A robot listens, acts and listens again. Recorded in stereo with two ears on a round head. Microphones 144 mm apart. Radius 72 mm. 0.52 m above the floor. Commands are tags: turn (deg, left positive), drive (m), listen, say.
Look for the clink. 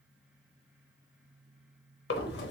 <listen/>
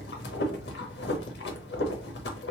<listen/>
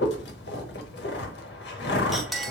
<turn deg="30"/>
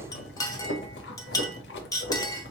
<turn deg="150"/>
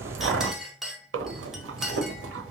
<say>Found it: a clink, straight ahead.</say>